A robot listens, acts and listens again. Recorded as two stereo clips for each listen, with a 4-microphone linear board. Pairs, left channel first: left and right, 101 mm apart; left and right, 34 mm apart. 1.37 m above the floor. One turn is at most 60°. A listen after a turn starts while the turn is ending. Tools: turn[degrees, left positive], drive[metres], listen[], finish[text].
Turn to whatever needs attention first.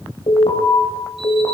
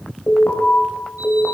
Thought: The alarm: about 60° left or 120° left.
Action: turn[60]
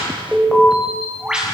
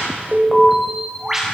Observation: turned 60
Action: finish[Facing the alarm.]